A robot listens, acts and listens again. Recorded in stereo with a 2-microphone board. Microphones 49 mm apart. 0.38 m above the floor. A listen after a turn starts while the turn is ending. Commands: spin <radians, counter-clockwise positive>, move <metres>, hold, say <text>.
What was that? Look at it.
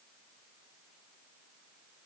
hold
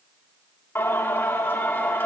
spin 0.87
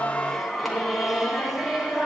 spin -0.17
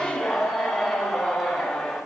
say Facing the singing.